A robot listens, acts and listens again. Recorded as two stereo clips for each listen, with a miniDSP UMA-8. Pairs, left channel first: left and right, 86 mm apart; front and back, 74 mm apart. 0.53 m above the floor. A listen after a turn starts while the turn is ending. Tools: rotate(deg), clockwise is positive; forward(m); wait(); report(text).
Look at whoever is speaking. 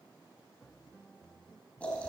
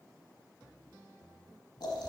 wait()
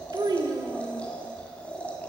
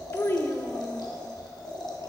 rotate(60)
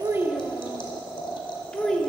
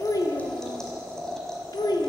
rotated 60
rotate(-10)
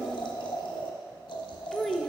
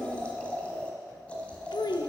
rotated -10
report("Found it: a child speaking, straight ahead.")